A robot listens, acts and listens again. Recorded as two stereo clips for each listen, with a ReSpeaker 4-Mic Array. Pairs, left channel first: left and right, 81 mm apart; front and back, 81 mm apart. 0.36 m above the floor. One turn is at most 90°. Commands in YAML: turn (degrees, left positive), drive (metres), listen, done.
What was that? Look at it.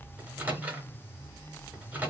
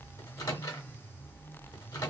turn: -25
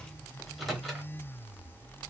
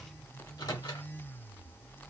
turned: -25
done: "Facing the microwave, 1 to 2 m away."